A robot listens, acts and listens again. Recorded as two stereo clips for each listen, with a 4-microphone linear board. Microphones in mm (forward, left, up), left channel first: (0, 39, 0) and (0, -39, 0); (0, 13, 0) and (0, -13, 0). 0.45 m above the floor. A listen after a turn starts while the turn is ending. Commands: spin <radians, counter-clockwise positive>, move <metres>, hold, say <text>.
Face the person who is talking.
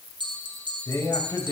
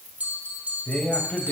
spin 0.79
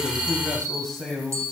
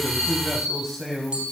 say Found it: a man speaking, straight ahead.